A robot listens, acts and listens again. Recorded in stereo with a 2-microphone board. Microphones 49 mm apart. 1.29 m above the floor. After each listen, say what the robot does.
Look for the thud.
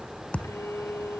Turn 25° left.
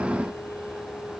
Keep listening.
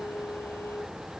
I heard a thud, but can't make it out now. It was about straight ahead or 130° left.